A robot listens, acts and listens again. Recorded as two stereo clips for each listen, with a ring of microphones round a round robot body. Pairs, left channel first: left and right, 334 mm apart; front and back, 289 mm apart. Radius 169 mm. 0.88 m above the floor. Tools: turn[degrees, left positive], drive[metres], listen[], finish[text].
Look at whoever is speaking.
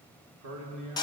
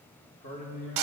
Thought: The man speaking: 55° right.
Action: turn[-55]
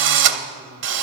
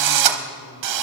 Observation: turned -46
Thought: Nothing new. It was at 10° right.
Action: turn[-10]
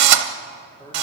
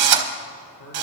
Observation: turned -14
Thought: The man speaking is now 10° left.
Action: turn[10]
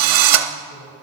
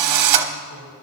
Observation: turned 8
Action: listen[]
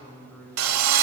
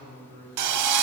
Action: finish[Found it: a man speaking, straight ahead, over 4 m away.]